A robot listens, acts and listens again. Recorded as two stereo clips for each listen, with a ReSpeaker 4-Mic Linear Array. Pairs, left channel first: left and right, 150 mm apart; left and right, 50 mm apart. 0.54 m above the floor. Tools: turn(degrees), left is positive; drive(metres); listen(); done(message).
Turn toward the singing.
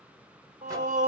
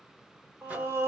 turn(degrees=-50)
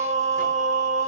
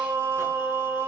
turn(degrees=-60)
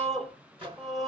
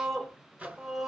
done("Found it: singing, straight ahead, under 1 m away.")